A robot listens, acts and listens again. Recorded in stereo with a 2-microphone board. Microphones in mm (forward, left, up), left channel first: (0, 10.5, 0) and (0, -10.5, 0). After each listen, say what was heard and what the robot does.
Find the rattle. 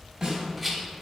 Turn 30° right.
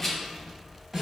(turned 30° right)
So it is at 20° left. Turn 20° left.
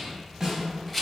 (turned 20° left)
Facing the rattle, under 1 m away.